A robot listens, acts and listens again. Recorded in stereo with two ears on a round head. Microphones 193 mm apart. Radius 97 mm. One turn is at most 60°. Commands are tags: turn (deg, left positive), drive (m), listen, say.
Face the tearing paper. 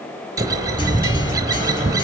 <listen/>
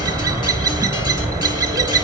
<listen/>
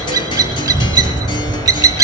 <say>I can't make out tearing paper to turn to.</say>